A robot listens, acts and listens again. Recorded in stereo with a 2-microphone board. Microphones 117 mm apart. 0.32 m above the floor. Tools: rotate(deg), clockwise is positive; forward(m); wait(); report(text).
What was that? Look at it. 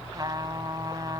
rotate(35)
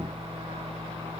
wait()
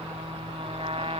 rotate(105)
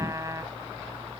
rotate(35)
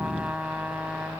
rotate(10)
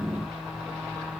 wait()
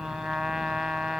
report("Facing the trumpet.")